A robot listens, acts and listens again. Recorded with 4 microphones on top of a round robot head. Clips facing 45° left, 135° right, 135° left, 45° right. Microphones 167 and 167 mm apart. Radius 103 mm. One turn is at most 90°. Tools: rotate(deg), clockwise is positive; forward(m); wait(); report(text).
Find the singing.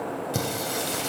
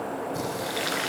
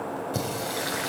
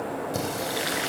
rotate(-50)
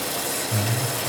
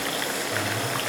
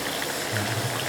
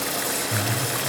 rotate(10)
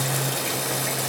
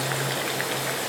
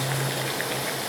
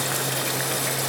report("Found it: singing, straight ahead, over 4 m away.")